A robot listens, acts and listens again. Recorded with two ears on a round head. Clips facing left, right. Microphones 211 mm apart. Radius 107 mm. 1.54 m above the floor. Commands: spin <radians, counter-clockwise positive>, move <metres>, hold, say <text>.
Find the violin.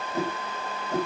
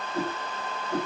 hold
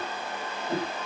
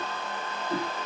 hold
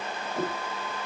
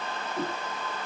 say I can't make out a violin, only a whoosh.